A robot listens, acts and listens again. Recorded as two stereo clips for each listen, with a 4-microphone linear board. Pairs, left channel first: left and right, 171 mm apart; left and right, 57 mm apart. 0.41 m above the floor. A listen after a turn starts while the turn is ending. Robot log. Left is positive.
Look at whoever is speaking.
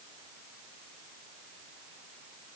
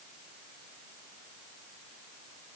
cmd idle
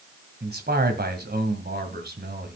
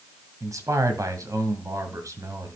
note: The man speaking: about 65° right or 115° right.
cmd yaw -65
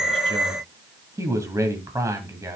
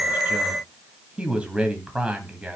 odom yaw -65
note: So it is at 20° right.
cmd yaw -20
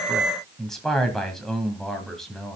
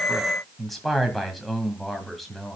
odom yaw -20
end: Facing the man speaking.